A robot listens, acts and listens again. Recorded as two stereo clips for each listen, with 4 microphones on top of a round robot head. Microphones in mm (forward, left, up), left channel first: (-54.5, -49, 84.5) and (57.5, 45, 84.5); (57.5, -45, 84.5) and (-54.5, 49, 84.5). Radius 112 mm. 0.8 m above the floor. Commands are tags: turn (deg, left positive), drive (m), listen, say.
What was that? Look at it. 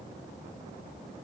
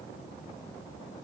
<listen/>
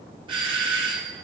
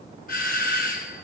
<turn deg="-15"/>
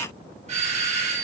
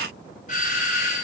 <say>Found it: a doorbell, straight ahead.</say>